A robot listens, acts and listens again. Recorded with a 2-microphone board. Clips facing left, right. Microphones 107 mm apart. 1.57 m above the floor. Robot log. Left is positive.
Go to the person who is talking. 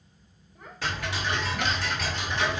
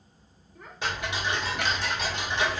cmd yaw +30
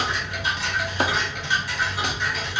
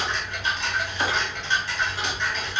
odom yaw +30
cmd idle
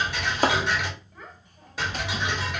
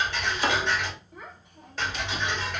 note: So it is at 20° right.
cmd yaw -20
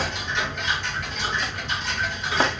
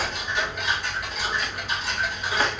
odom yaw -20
cmd idle
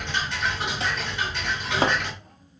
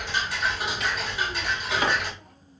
cmd idle
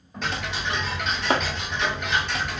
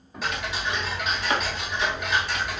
cmd fwd 1.0
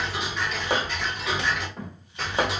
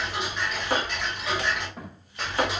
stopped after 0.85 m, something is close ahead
end: I am next to the child speaking.